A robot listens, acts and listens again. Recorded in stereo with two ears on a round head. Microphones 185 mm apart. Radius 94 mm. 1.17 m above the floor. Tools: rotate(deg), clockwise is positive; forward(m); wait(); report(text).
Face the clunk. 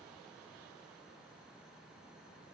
wait()
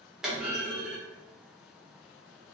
rotate(30)
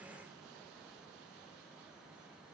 wait()
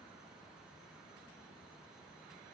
report("I heard a clunk, but can't make it out now. It was about 25° left or 145° right.")